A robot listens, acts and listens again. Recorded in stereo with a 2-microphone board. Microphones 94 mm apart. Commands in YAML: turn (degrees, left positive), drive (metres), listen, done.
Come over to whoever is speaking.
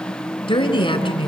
turn: 70
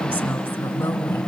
turn: 20
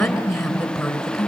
drive: 1.0
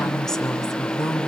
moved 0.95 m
drive: 1.0
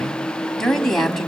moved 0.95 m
drive: 1.0
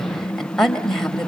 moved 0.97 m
turn: 10
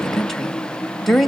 drive: 1.0
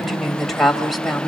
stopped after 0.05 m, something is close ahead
done: "I am next to the woman speaking."